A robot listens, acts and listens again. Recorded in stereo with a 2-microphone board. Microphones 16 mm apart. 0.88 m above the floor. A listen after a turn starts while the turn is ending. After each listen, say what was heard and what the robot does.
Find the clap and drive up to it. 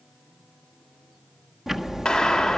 Turn 90° left.
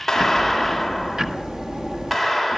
Drive 1.0 m forward.
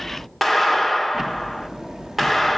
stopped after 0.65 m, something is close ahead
Something is in my way. I am facing the clap but have not reached it.